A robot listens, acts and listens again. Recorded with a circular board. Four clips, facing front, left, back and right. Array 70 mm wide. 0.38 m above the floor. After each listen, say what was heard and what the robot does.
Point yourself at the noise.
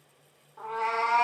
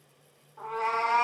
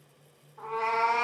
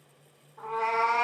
The cat meowing: 25° left. Turn 25° left.
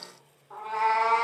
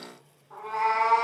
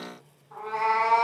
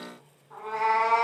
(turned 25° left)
Facing the cat meowing.